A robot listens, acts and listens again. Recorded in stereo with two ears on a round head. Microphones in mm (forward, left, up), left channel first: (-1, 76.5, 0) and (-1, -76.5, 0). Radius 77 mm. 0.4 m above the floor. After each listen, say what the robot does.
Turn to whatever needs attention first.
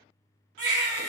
Turn 70° right.
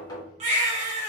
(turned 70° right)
Turn 40° right.
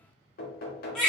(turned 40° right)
Facing the baby crying, 1 to 2 m away.